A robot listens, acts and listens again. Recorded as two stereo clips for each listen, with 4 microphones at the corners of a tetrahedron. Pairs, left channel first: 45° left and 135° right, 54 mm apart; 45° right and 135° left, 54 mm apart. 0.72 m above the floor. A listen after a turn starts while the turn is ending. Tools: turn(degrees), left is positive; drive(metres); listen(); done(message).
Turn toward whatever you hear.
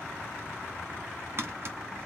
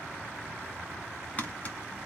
turn(degrees=-100)
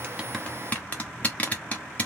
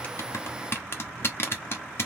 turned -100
turn(degrees=-15)
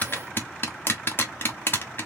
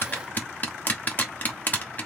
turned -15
done("Found it: tapping, straight ahead, 1 to 2 m away.")